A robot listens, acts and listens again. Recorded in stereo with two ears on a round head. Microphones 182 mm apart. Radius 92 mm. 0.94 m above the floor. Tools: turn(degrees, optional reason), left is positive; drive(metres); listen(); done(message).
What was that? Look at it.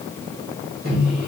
turn(degrees=-45, reason="The microwave: about 45° right or 135° right.")
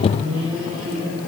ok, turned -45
turn(degrees=-90, reason="So it is at 90° right.")
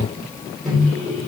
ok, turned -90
done("Facing the microwave, 2 to 4 m away.")